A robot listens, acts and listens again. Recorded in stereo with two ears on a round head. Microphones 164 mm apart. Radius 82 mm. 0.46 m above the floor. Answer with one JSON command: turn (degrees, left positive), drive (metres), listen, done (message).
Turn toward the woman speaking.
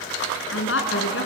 {"turn": 75}
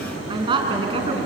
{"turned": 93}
{"turn": -30}
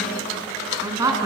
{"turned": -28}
{"turn": -20}
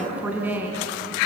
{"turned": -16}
{"turn": -10}
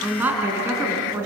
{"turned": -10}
{"turn": -10}
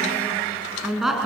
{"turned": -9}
{"done": "Facing the woman speaking, over 4 m away."}